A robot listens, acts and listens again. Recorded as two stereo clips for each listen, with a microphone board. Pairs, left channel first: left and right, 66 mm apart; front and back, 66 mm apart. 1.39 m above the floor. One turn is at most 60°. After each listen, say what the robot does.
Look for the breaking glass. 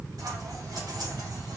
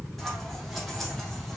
Keep listening.
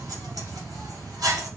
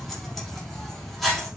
Keep listening.
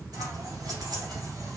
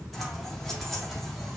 I can't make out breaking glass to turn to.